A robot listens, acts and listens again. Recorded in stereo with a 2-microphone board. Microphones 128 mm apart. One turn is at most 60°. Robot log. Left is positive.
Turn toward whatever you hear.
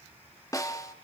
note: The snare drum: about 25° left or 155° left.
cmd yaw +25
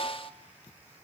note: So it is at 125° left.
cmd yaw +60
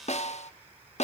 note: The snare drum is now 95° left.
cmd yaw +60
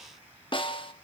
note: The snare drum is now 50° left.
cmd yaw +50
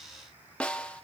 note: The snare drum is now 10° left.
cmd yaw +10
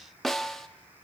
end: Facing the snare drum.